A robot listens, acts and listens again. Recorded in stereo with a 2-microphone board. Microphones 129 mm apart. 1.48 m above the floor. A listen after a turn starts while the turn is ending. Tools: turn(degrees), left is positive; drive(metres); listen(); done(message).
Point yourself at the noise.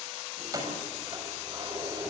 turn(degrees=-30)
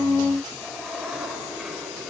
done("Facing the keys jangling.")